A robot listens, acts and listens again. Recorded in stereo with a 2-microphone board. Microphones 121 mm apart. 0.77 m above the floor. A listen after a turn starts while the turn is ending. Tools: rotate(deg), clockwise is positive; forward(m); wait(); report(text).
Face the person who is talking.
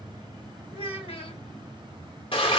rotate(-50)
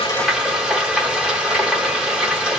wait()
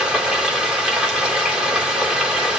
wait()
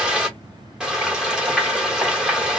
report("I heard a child speaking, but can't make it out now. It was about straight ahead or 80° left.")